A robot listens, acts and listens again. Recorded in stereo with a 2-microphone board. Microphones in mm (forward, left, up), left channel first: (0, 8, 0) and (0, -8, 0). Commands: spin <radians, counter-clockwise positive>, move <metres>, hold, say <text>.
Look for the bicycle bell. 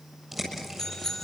spin 0.44
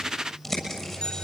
hold
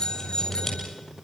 spin 2.27
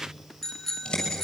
spin 0.35
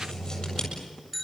say Found it: a bicycle bell, straight ahead, 2 to 4 m away.